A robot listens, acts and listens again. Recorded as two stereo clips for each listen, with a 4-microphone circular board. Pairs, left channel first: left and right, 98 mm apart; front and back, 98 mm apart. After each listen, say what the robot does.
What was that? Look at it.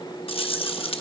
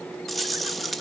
Turn 90° left.
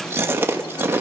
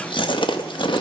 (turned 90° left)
Turn 25° right.
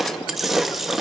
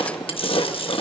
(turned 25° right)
Found it: chewing, straight ahead.